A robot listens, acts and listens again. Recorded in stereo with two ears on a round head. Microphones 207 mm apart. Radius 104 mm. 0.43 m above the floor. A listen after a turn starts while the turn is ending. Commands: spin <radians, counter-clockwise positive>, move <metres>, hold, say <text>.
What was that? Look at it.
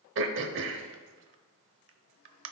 spin -0.96
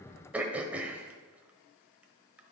say Facing the throat clearing, under 1 m away.